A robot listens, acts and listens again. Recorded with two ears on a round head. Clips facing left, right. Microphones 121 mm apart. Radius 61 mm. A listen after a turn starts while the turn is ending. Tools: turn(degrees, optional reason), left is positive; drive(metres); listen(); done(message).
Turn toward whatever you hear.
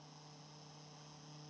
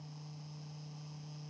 listen()
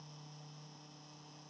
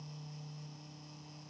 listen()
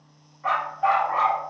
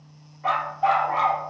turn(degrees=-35, reason="The dog barking: about 35° right or 145° right.")
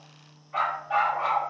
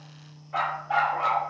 turn(degrees=-110, reason="So it is at 110° right.")
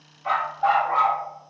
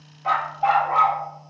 turn(degrees=-25, reason="The dog barking is now 25° right.")
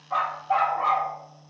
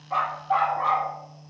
turn(degrees=15, reason="The dog barking is now 15° left.")
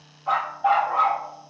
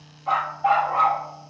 done("Facing the dog barking.")